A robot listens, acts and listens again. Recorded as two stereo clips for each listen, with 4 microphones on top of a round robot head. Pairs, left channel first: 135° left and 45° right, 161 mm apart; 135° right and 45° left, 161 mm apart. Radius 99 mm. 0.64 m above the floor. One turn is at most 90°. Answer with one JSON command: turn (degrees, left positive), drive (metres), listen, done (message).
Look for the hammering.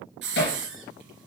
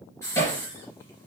{"turn": 90}
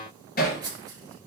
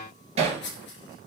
{"turn": 90}
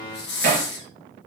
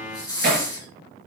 {"done": "Facing the hammering."}